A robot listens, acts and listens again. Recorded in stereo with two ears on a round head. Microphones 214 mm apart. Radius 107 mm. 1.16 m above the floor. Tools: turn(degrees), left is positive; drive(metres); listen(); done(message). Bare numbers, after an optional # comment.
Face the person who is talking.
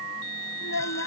# The child speaking: about 65° left or 115° left.
turn(65)
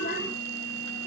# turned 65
listen()
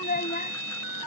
# So it is at 35° left.
turn(35)
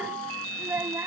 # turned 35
# The child speaking is now 10° right.
turn(-10)
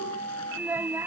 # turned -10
# The child speaking is now 10° right.
turn(-10)
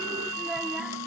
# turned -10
listen()
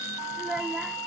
done("Facing the child speaking.")